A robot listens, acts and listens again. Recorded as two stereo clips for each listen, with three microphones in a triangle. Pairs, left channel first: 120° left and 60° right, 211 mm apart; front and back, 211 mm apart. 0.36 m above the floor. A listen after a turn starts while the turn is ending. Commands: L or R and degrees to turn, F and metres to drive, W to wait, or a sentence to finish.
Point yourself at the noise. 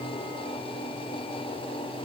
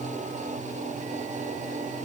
W
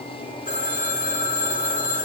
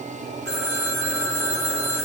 L175
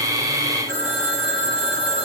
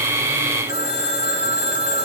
R40
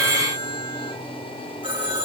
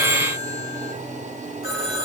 Found it: a phone ringing, straight ahead.